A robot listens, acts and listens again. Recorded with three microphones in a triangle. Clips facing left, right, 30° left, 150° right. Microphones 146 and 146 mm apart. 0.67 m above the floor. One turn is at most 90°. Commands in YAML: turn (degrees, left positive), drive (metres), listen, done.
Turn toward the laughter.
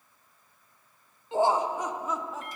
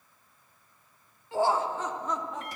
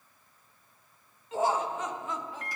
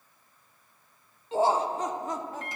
turn: 90
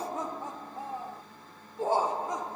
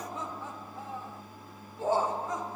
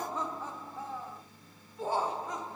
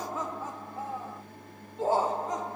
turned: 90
turn: 90
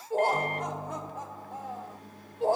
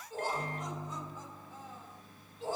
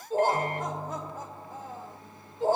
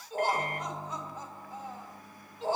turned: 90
turn: 65
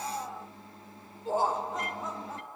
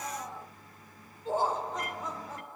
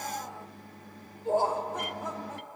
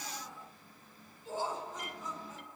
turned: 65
done: "Facing the laughter, 2 to 4 m away."